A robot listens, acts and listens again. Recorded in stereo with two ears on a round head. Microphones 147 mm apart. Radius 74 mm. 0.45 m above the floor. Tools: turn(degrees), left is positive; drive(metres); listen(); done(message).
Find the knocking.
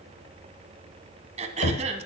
turn(degrees=55)
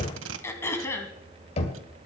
turn(degrees=45)
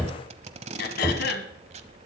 done("Facing the knocking.")